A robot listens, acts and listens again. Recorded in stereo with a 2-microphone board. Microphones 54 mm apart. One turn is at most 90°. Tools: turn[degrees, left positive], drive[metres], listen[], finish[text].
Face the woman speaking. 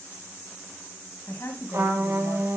Thought: The woman speaking: about 55° left or 125° left.
Action: turn[55]
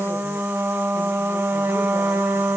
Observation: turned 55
Action: listen[]
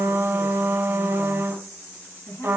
Thought: So it is at 55° left.
Action: turn[55]
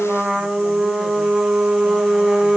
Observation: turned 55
Action: listen[]
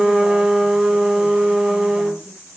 Action: listen[]
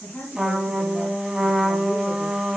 Thought: The woman speaking is now 15° left.
Action: turn[15]
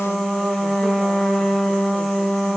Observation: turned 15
Action: listen[]
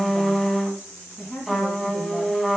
Action: finish[Facing the woman speaking, 2 to 4 m away.]